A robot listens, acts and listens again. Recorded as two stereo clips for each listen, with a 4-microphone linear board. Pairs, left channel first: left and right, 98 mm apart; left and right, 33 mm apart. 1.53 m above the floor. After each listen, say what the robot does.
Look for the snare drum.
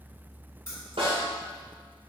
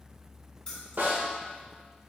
Turn 65° right.
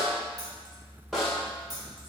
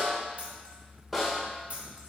Facing the snare drum, 2 to 4 m away.